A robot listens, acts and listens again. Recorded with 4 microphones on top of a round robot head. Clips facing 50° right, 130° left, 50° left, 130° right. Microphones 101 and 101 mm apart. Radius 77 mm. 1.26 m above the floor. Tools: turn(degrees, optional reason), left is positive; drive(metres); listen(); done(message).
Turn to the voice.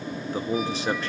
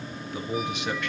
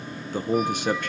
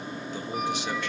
done("Found it: a man speaking, straight ahead, 1 to 2 m away.")